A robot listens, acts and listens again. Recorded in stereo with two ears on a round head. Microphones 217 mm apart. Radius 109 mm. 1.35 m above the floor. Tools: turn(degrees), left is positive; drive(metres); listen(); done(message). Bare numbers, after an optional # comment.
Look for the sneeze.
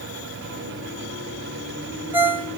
listen()
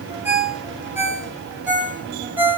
listen()
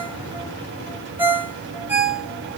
done("I can't make out a sneeze, only a ringtone.")